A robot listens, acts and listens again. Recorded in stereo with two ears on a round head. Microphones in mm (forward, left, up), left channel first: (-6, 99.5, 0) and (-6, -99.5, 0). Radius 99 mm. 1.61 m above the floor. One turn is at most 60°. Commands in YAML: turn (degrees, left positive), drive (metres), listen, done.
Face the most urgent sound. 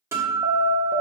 turn: -30
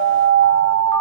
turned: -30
turn: -60
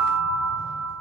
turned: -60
turn: -55
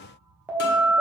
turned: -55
turn: -10
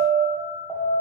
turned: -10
done: "Found it: an alarm, straight ahead."